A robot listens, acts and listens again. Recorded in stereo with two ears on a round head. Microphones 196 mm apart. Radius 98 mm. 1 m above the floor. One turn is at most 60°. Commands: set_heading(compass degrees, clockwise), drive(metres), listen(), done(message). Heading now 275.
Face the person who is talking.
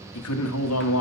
set_heading(215)
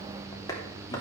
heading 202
set_heading(187)
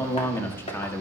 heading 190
set_heading(180)
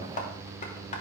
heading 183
listen()
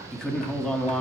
done("Facing the man speaking, 1 to 2 m away.")